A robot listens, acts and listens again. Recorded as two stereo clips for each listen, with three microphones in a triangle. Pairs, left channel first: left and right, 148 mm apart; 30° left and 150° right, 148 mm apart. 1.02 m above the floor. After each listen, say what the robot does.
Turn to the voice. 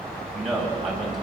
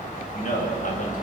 Found it: a man speaking, straight ahead, over 4 m away.